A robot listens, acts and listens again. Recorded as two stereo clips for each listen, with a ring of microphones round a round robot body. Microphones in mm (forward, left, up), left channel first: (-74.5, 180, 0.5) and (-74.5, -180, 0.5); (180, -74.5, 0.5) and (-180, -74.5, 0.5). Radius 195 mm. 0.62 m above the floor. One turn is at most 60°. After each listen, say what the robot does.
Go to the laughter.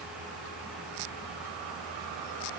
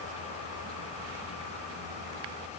Keep listening.
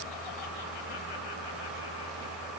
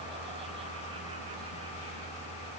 Keep listening.
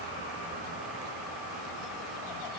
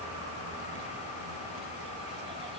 I can't make out laughter to turn to.